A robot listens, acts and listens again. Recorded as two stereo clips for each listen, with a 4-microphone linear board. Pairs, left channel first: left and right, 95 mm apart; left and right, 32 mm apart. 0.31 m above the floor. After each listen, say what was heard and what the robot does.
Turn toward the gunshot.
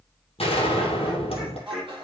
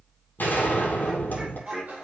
Turn 90° left.
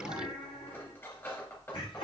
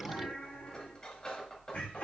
Facing where the gunshot came from. I can't hear it now.